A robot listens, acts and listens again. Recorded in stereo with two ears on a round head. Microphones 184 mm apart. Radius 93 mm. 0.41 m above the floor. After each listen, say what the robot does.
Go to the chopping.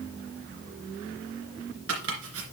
Turn 65° right.
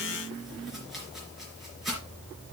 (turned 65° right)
Drive 1.0 m forward.
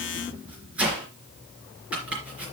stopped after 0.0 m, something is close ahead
Something is in my way. I am facing the chopping but have not reached it.